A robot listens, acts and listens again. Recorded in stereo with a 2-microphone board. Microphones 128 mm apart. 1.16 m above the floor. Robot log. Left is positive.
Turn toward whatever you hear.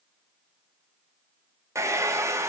note: The hair dryer: about 20° right or 160° right.
cmd yaw -20
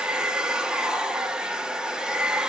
end: Found it: a hair dryer, straight ahead.